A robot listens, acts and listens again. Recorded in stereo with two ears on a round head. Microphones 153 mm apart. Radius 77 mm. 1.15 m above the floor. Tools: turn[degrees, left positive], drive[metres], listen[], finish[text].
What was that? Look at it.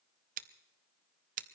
Thought: The scissors: about 50° right or 130° right.
Action: turn[-50]
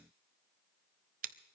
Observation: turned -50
Thought: So it is at 65° right.
Action: turn[-65]
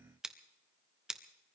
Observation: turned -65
Action: finish[Facing the scissors, under 1 m away.]